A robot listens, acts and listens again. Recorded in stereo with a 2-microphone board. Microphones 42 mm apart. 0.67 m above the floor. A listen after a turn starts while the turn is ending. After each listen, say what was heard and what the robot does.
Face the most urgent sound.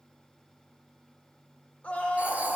The scream: about 35° left or 145° left. Turn 35° left.
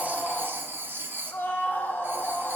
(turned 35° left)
So it is at 110° left. Turn 110° left.
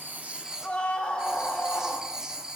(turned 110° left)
The scream is now 30° left. Turn 30° left.
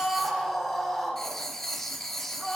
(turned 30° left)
Facing the scream, 1 to 2 m away.